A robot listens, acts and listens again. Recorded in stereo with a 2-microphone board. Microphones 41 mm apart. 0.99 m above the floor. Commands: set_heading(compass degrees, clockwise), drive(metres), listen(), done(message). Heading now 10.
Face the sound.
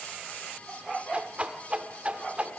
set_heading(40)
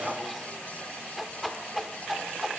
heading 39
done("Found it: a whoosh, straight ahead.")